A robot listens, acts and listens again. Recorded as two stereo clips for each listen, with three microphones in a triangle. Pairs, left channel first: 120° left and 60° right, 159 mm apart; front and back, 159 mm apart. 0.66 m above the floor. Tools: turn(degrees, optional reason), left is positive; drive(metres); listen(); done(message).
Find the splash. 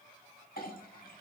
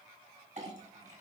listen()
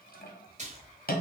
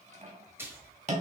turn(degrees=-105, reason="The splash: 105° right.")
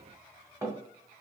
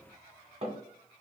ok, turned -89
turn(degrees=-15, reason="Nothing new. It was at 15° right.")
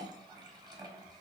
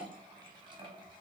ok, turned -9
done("Facing where the splash came from. I can't hear it now.")